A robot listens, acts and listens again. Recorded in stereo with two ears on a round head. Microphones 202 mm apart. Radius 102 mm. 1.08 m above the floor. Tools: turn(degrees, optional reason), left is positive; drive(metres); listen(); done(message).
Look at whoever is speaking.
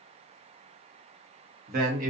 turn(degrees=-40, reason="The man speaking: about 40° right or 140° right.")
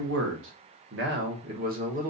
turn(degrees=-35, reason="The man speaking: about 35° right or 145° right.")
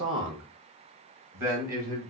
turn(degrees=-35, reason="The man speaking: about 35° right or 145° right.")
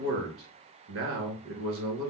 turn(degrees=-110, reason="So it is at 110° right.")
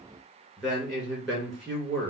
turn(degrees=15, reason="The man speaking is now 15° left.")
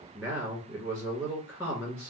done("Found it: a man speaking, straight ahead, 1 to 2 m away.")